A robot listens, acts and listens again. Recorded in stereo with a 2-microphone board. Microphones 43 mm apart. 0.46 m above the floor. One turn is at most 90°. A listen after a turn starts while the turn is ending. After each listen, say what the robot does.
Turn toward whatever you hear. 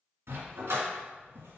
Turn 90° right.
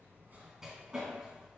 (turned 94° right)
Turn 15° right.
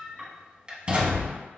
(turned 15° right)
Turn 30° right.
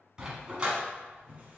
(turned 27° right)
Turn 20° right.
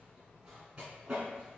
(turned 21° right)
Turn 20° right.
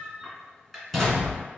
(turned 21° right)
Found it: a dog barking, straight ahead.